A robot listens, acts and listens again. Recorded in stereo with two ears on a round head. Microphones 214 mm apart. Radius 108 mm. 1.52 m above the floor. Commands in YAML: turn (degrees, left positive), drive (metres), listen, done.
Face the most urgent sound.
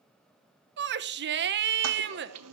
turn: -50
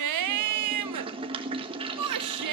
turn: -80
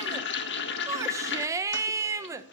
turn: -10
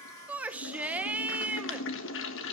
done: "Found it: a shout, straight ahead, 1 to 2 m away."